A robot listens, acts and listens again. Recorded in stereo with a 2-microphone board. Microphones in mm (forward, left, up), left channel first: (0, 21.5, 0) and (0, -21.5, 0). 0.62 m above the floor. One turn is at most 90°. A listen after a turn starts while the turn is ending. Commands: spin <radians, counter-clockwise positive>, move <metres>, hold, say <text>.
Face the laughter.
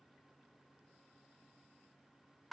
hold
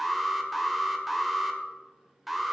hold
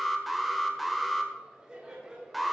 spin -0.52
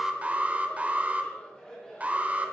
spin 0.35
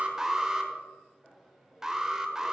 say Facing the laughter, over 4 m away.